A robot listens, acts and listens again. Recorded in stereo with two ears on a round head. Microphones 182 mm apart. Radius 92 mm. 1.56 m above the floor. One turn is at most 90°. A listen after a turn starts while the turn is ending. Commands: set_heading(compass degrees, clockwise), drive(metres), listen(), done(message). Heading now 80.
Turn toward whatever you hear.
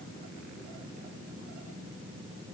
listen()
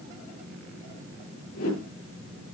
set_heading(350)
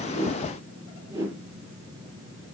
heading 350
set_heading(5)
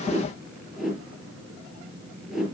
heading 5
done("Found it: a whoosh, straight ahead.")